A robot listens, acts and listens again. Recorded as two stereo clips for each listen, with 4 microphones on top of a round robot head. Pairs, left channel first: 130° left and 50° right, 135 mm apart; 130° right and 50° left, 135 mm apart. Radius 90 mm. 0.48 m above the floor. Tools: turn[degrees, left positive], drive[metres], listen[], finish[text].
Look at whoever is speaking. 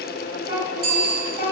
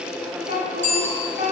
Thought: The child speaking: 105° right.
Action: turn[-105]
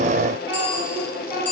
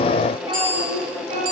Action: finish[Facing the child speaking.]